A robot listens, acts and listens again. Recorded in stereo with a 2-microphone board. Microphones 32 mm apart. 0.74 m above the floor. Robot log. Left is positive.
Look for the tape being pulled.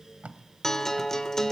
note: The tape being pulled: about 50° right or 130° right.
cmd yaw -50
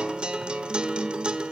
cmd idle
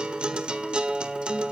cmd idle
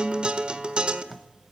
end: Facing the tape being pulled.